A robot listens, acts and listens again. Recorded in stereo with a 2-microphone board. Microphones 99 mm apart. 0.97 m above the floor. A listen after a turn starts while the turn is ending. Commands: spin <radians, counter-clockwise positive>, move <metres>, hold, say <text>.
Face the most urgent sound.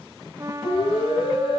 spin 1.13
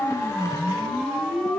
say Facing the siren, over 4 m away.